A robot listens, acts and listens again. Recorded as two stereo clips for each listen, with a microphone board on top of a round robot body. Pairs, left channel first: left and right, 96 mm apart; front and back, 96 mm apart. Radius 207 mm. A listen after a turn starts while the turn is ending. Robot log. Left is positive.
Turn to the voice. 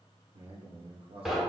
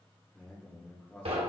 note: The man speaking: 75° right.
cmd yaw -75
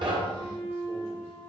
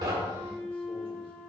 cmd idle
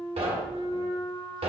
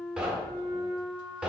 cmd idle
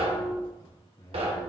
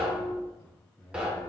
note: The man speaking is now 55° left.
cmd yaw +55
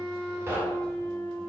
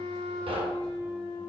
cmd idle
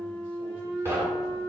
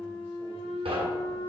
cmd idle
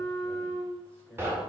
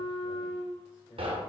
end: Facing where the man speaking came from. I can't hear it now.